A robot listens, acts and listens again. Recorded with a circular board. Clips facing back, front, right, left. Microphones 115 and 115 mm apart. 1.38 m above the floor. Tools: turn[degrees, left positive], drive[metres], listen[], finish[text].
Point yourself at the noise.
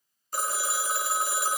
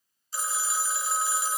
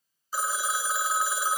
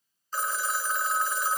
Thought: The phone ringing: 170° right.
Action: turn[-170]
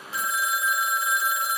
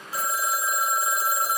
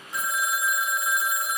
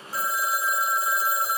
Thought: The phone ringing is now 45° left.
Action: turn[45]
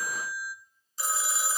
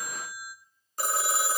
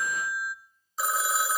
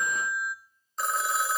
Action: finish[Found it: a phone ringing, straight ahead.]